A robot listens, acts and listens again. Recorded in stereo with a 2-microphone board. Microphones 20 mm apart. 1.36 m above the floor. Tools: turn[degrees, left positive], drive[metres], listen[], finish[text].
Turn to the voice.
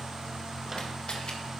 Action: listen[]
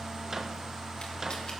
Action: listen[]
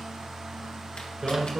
Thought: The man speaking: about 25° right or 155° right.
Action: turn[-25]
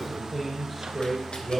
Action: finish[Facing the man speaking.]